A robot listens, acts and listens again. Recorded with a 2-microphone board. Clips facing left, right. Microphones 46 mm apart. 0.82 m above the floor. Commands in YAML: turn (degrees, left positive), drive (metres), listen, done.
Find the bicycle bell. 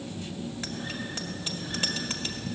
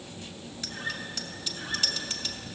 turn: 40
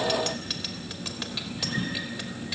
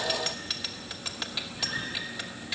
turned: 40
done: "Found it: a bicycle bell, straight ahead, 2 to 4 m away."